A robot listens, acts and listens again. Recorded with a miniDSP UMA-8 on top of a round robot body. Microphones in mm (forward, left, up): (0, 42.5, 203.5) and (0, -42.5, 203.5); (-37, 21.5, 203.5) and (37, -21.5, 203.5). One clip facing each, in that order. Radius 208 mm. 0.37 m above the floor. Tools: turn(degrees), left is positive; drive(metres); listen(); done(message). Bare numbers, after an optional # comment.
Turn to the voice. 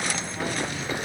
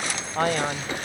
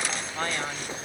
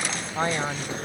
# The man speaking: 100° right.
turn(-100)
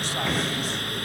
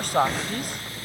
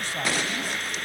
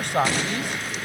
# The man speaking is now 55° right.
turn(-55)
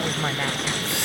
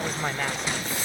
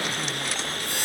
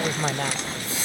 listen()
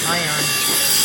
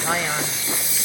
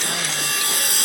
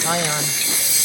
listen()
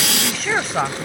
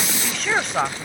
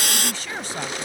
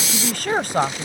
done("Facing the man speaking.")